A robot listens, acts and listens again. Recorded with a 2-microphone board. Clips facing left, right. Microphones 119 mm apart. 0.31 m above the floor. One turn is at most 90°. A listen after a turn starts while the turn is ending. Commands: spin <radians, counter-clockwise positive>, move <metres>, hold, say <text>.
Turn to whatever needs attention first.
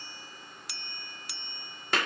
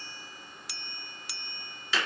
hold
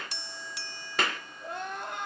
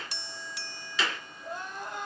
spin 1.13
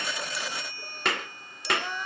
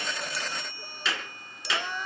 say Facing the crying.